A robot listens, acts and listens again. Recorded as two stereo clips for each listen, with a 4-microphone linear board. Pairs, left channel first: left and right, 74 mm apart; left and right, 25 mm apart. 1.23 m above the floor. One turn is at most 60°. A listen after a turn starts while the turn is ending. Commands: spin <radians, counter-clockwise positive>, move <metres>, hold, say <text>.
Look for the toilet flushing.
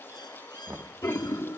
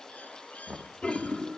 spin 0.52
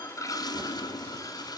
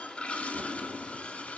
spin 1.05
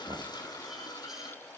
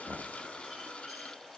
spin 1.05
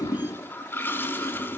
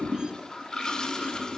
spin 0.52
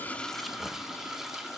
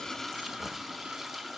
say Facing the toilet flushing, 1 to 2 m away.